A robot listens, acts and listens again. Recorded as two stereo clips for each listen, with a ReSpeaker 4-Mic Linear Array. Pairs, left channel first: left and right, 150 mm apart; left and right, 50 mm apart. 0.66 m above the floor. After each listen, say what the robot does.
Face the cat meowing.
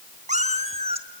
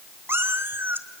Turn 45° right.
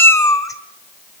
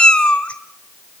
Turn 20° left.
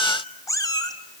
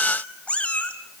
Turn 25° left.
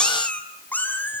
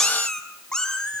Turn 15° left.
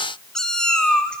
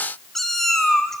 Found it: a cat meowing, straight ahead.